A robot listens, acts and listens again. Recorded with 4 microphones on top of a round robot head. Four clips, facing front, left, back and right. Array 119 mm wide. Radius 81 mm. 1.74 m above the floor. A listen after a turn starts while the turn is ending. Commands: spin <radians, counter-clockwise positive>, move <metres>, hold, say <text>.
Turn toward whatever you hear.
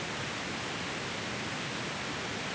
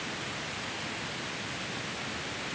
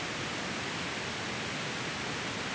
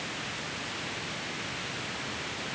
hold
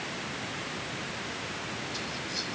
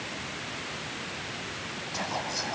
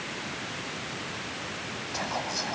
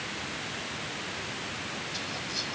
spin 2.44
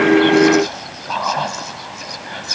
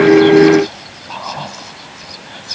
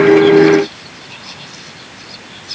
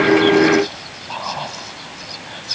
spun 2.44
say Found it: whispering, straight ahead.